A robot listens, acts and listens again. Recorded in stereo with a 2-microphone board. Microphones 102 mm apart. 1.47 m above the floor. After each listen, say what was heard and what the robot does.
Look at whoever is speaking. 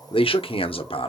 The man speaking: about 65° left or 115° left. Turn 65° left.
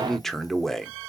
Facing the man speaking.